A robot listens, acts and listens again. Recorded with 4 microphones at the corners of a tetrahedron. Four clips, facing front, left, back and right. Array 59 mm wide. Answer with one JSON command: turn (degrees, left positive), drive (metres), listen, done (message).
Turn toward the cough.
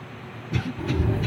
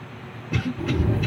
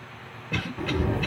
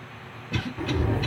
{"turn": 170}
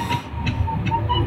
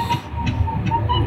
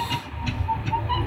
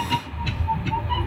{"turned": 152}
{"turn": 20}
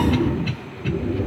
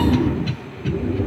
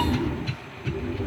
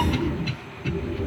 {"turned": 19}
{"done": "Facing the cough, 1 to 2 m away."}